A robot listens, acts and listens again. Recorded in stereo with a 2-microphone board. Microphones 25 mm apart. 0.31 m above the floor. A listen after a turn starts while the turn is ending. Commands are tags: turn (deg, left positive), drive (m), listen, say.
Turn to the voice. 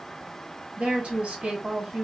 <turn deg="-55"/>
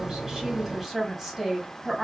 <turn deg="-15"/>
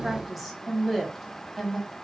<say>Facing the woman speaking.</say>